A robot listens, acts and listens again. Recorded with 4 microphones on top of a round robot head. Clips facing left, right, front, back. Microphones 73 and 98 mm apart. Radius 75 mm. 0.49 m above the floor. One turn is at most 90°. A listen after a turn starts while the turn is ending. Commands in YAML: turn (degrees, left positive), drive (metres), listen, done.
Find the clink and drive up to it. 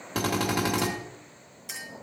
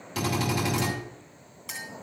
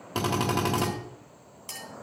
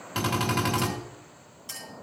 turn: -45
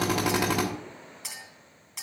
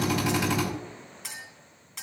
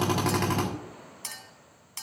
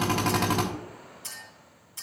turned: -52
drive: 1.0
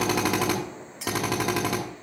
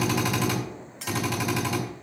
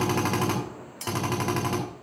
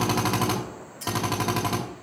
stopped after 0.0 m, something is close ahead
turn: 10
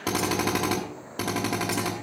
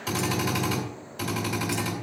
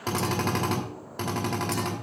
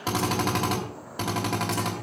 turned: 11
listen: true
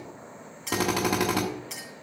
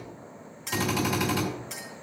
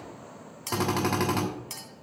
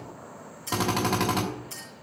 done: "Blocked. The clink is further on, straight ahead."